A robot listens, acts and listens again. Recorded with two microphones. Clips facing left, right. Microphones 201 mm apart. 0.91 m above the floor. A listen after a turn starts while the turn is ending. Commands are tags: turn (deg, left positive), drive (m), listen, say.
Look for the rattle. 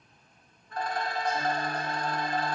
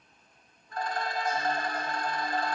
<turn deg="60"/>
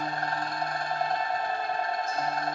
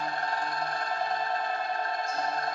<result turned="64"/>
<turn deg="55"/>
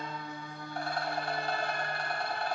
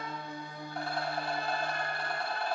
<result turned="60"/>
<say>Found it: a rattle, straight ahead.</say>